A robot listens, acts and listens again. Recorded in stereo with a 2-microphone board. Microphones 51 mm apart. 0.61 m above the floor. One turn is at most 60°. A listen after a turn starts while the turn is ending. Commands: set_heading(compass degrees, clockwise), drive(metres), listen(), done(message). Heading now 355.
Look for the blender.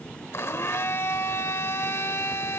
set_heading(295)
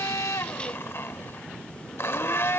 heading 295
set_heading(240)
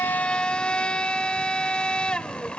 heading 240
set_heading(220)
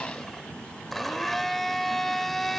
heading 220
done("Found it: a blender, straight ahead, under 1 m away.")